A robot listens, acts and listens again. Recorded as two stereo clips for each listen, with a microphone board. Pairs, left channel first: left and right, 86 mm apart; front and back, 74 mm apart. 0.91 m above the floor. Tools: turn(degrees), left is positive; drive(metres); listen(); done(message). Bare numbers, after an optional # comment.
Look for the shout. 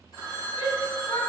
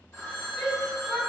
# The shout: 90° left.
turn(90)
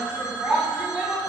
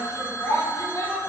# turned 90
# The shout is now 15° right.
turn(-15)
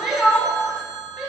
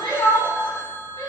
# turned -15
done("Found it: a shout, straight ahead.")